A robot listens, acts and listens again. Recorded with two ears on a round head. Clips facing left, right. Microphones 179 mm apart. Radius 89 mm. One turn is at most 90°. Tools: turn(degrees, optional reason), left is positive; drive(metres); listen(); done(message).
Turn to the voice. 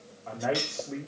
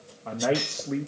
turn(degrees=-65, reason="The man speaking: about 65° right or 115° right.")
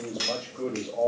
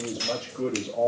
done("Facing the man speaking.")